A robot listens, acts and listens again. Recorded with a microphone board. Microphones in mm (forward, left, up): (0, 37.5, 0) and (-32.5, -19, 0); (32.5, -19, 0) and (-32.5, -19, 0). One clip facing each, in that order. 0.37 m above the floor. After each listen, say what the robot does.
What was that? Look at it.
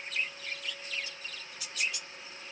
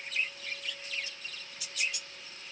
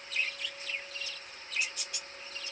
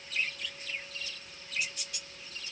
Keep listening.
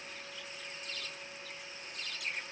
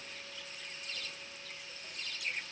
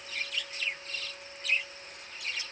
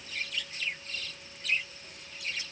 Keep listening.
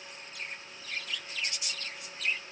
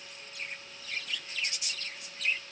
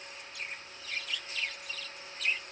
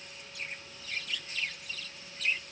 I can't make out anything.